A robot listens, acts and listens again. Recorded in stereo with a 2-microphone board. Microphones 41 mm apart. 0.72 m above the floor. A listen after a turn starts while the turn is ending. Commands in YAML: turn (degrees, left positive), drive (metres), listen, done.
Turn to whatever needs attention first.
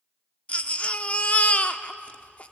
turn: 35
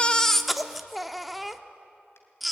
done: "Facing the baby crying, under 1 m away."